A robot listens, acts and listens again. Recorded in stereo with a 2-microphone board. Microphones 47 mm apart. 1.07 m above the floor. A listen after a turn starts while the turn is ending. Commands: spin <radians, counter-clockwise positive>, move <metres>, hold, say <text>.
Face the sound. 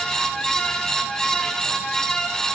hold
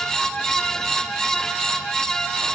hold
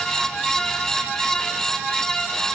say I can't make out anything to turn to.